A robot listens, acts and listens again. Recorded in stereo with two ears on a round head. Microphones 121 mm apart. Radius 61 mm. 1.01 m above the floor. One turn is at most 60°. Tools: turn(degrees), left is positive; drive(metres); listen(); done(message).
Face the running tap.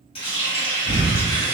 turn(degrees=40)
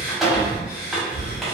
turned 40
done("Facing the running tap, 1 to 2 m away.")